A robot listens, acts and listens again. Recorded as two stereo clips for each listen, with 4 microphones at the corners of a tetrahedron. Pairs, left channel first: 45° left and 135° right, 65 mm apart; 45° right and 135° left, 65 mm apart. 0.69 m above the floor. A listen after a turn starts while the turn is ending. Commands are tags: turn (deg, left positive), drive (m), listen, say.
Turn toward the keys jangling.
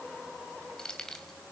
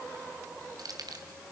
<turn deg="125"/>
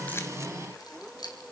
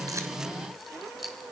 <turn deg="45"/>
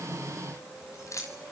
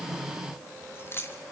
<say>Facing the keys jangling.</say>